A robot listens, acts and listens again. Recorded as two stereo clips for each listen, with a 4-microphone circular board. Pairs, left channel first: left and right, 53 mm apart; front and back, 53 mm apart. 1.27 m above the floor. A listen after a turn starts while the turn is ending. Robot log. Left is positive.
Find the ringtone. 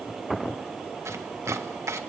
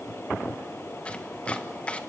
cmd idle
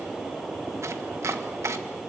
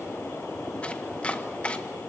cmd idle
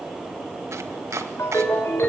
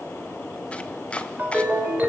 note: The ringtone: 120° left.
cmd yaw +120
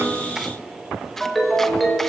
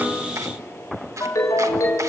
end: Facing the ringtone, over 4 m away.